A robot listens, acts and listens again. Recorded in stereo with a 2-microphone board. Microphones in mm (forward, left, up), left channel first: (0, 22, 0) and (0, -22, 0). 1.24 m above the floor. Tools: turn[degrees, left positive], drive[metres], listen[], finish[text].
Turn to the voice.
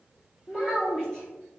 Thought: The child speaking: about 20° left or 160° left.
Action: turn[20]
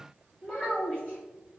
Thought: So it is at 140° left.
Action: turn[140]
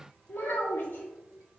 Thought: The child speaking is now 50° left.
Action: turn[50]
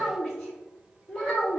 Action: finish[Found it: a child speaking, straight ahead, 1 to 2 m away.]